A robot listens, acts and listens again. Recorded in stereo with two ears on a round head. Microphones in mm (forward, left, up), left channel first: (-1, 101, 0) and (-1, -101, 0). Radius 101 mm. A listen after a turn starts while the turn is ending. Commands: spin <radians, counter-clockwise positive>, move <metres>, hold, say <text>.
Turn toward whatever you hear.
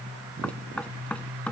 spin 0.52
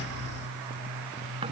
hold
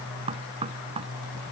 spin -0.44
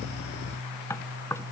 spin 0.17
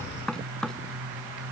say Facing the knocking.